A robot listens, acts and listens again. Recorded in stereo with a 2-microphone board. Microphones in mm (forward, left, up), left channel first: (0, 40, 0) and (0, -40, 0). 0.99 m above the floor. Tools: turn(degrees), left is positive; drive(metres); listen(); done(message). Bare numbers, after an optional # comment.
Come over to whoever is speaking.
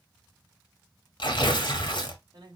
# The man speaking: about 65° right or 115° right.
turn(-65)
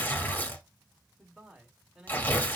drive(1.0)
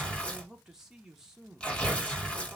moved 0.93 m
drive(1.0)
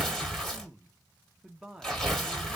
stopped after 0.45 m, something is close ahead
done("I am next to the man speaking.")